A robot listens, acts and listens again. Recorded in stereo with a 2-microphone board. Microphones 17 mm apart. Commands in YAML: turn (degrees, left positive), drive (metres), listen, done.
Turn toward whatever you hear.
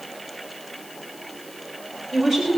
turn: -25
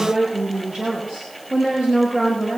turn: -125
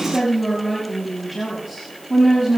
done: "Found it: a woman speaking, straight ahead."